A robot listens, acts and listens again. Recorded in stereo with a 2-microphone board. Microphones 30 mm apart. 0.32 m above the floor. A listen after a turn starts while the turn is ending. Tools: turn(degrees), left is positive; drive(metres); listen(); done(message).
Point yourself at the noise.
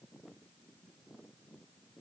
listen()
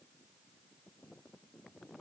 listen()
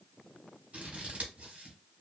turn(degrees=-45)
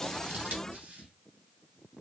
turn(degrees=-85)
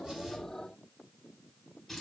done("Found it: scissors, straight ahead.")